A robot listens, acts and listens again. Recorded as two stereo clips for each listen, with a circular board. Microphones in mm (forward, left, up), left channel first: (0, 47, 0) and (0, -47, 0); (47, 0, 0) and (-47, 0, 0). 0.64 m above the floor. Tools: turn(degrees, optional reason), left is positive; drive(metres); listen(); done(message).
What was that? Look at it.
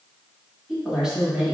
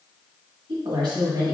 turn(degrees=-170, reason="The woman speaking: 170° right.")
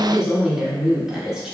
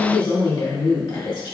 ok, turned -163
turn(degrees=-10, reason="The woman speaking is now 10° right.")
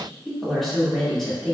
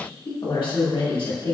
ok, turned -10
done("Found it: a woman speaking, straight ahead.")